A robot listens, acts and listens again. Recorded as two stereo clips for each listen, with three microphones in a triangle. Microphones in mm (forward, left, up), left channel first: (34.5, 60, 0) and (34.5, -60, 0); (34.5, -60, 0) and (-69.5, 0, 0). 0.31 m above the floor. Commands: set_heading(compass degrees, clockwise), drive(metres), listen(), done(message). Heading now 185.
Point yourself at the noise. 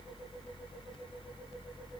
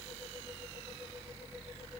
listen()
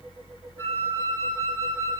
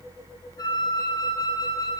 set_heading(165)
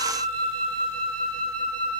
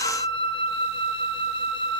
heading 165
done("Found it: a flute, straight ahead.")